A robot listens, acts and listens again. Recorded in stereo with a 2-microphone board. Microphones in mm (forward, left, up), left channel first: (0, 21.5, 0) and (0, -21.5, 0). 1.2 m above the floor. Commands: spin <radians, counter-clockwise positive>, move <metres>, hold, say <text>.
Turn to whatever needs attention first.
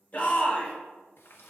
spin 0.61
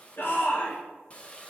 spin 2.01
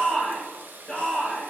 spin 0.44
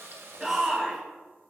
say Facing the shout, 2 to 4 m away.